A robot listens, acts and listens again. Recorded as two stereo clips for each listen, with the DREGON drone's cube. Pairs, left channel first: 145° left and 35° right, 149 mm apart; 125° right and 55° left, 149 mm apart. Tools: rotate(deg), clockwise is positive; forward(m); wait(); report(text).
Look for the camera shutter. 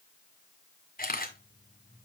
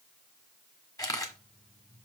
rotate(-165)
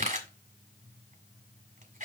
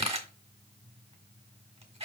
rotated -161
report("Facing the camera shutter.")